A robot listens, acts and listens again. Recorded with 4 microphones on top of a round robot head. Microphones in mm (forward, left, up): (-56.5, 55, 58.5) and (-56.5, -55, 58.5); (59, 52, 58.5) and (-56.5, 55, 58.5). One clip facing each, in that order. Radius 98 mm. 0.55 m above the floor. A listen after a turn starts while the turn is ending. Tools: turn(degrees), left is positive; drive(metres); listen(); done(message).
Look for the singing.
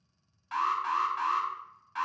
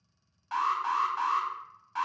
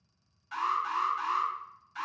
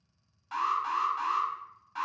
listen()
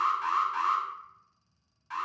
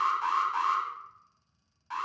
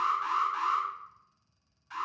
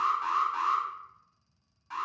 listen()
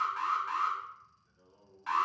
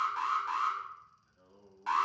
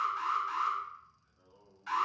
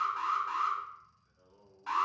turn(degrees=-95)
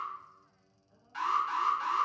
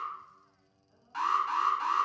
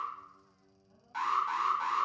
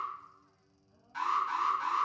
turn(degrees=10)
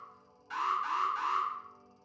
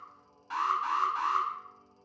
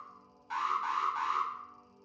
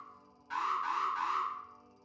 done("Facing the singing, over 4 m away.")